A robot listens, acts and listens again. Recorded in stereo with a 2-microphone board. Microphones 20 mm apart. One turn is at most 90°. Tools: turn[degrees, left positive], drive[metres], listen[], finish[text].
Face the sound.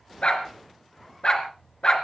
Thought: The dog barking: about 45° left or 135° left.
Action: turn[45]
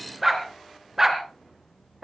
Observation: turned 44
Thought: So it is at 25° right.
Action: turn[-25]
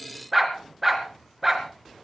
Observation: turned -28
Thought: The dog barking is now 15° right.
Action: turn[-15]
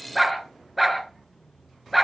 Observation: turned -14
Action: finish[Facing the dog barking, 2 to 4 m away.]